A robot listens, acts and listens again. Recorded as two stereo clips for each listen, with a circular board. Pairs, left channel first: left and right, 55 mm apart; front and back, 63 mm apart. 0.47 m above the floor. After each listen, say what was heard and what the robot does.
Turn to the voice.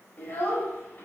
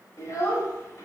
The child speaking: 30° left. Turn 30° left.
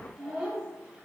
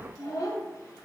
The child speaking is now 10° right. Turn 10° right.
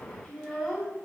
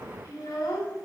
Facing the child speaking, 1 to 2 m away.